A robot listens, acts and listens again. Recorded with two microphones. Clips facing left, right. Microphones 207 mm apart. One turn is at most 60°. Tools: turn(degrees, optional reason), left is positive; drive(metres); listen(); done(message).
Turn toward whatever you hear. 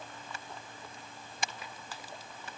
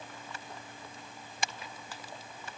listen()
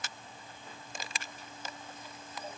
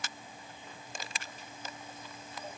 listen()
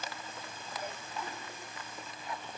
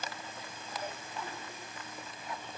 done("I can't make out anything to turn to.")